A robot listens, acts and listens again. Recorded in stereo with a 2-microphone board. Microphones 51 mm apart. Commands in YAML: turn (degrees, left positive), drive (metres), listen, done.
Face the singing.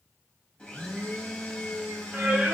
turn: -30
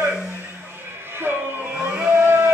turn: -135
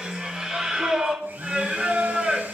turn: -20
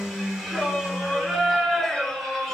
done: "Facing the singing, 2 to 4 m away."